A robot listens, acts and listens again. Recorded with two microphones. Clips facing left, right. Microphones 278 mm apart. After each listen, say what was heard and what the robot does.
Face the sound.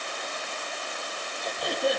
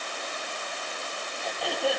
The throat clearing: about 20° left or 160° left. Turn 20° left.
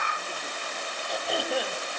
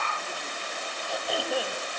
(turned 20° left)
Found it: throat clearing, straight ahead, over 4 m away.